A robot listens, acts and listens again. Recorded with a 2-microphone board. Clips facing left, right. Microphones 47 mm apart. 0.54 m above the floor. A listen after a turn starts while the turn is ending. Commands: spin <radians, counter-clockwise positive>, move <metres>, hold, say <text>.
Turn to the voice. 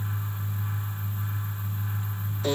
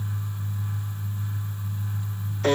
hold
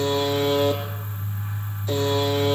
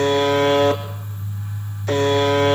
hold
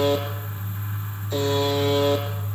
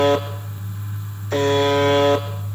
say I can't make out anyone speaking to turn to.